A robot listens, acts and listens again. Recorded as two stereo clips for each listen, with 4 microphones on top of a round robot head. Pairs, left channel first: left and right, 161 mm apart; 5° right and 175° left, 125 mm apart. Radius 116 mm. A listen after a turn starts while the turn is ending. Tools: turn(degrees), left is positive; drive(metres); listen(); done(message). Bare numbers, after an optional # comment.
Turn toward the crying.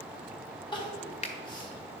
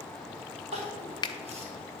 # The crying: 150° left.
turn(150)
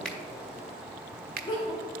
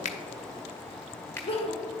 # The crying is now 25° left.
turn(25)
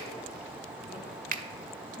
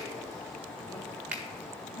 done("Found it: crying, straight ahead, 1 to 2 m away.")